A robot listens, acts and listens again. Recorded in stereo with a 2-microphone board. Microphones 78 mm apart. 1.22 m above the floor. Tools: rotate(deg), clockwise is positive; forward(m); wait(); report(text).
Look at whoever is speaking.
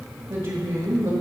rotate(65)
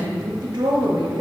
rotate(50)
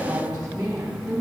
rotate(15)
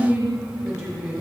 report("Found it: a woman speaking, straight ahead.")